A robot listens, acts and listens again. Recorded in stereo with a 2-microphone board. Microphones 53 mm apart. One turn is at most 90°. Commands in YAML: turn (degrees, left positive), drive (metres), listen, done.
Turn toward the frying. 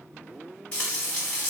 turn: 20
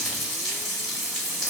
done: "Found it: frying, straight ahead."